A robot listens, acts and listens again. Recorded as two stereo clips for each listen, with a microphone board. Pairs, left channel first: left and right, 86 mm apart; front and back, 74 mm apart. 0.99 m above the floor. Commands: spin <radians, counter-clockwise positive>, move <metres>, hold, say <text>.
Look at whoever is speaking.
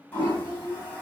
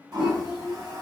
spin -1.75
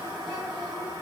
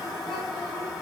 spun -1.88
hold
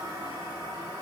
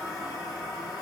hold
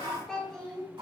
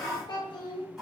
say Found it: a child speaking, straight ahead.